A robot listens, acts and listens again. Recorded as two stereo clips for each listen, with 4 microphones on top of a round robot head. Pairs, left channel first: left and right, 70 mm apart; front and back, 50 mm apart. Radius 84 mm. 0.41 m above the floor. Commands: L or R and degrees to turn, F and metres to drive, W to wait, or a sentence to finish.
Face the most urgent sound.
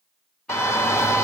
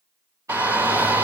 L130
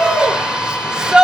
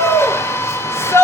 R15
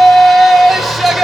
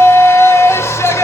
Found it: a shout, straight ahead, 1 to 2 m away.